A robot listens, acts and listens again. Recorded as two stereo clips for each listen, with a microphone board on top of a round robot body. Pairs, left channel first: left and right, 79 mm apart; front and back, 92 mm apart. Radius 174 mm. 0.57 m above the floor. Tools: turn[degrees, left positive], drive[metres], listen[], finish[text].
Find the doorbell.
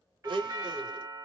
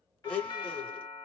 Thought: The doorbell: 45° right.
Action: turn[-45]
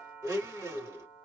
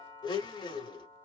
Action: finish[Facing the doorbell, 2 to 4 m away.]